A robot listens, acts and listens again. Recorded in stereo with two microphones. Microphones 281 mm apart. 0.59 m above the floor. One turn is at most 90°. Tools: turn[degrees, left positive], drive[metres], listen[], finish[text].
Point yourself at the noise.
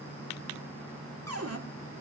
Thought: The cupboard door: about 60° right or 120° right.
Action: turn[-60]
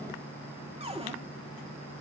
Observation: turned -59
Thought: So it is at 25° right.
Action: turn[-25]
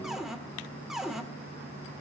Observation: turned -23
Action: finish[Facing the cupboard door, 1 to 2 m away.]